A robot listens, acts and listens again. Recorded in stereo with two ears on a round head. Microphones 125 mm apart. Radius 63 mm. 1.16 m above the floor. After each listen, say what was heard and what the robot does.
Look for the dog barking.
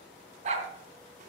The dog barking: about 60° right or 120° right. Turn 60° right.
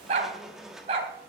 So it is at 45° right. Turn 45° right.
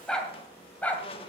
The dog barking is now 10° left. Turn 10° left.
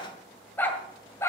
The dog barking is now 20° left. Turn 20° left.
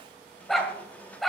Found it: a dog barking, straight ahead, 1 to 2 m away.